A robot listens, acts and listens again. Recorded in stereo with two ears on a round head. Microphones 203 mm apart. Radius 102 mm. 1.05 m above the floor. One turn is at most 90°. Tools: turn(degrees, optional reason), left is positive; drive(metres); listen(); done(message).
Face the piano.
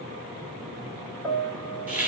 turn(degrees=30)
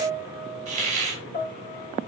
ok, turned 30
turn(degrees=90, reason="So it is at 140° left.")
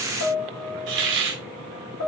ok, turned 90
turn(degrees=90, reason="The piano is now 95° left.")
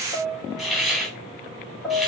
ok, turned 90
done("Facing the piano, 1 to 2 m away.")